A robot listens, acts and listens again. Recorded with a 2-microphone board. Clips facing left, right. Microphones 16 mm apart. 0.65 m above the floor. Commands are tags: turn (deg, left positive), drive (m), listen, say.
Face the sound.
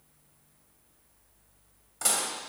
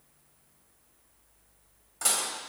<turn deg="30"/>
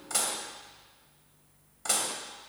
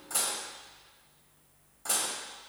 <turn deg="155"/>
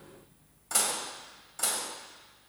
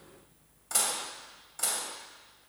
<say>Facing the dishes clattering, 2 to 4 m away.</say>